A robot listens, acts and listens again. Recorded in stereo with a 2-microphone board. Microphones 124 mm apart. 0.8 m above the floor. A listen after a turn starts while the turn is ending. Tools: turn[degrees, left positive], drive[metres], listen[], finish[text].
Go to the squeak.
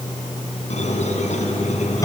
Thought: The squeak: about 70° left or 110° left.
Action: turn[70]
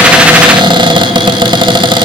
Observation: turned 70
Action: listen[]
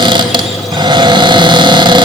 Action: listen[]
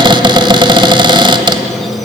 Action: finish[I heard a squeak, but can't make it out now. It was about straight ahead or 40° left. I did not reach it.]